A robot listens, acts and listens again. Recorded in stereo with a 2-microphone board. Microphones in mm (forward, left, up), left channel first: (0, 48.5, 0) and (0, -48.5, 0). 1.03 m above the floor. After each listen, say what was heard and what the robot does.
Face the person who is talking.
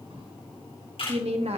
Turn 90° right.
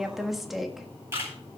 Facing the woman speaking.